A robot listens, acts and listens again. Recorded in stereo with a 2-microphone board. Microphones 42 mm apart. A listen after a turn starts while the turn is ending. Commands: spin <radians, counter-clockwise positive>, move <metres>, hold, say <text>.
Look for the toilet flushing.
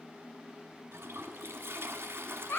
spin -1.31
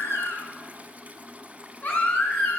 spin -0.61
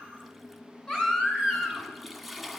say Facing the toilet flushing.